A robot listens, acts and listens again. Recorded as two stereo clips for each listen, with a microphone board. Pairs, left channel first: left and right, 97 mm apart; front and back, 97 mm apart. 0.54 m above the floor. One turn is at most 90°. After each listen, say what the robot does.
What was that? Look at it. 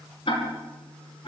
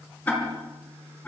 Turn 70° left.
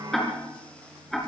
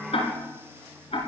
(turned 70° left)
Found it: ticking, straight ahead, over 4 m away.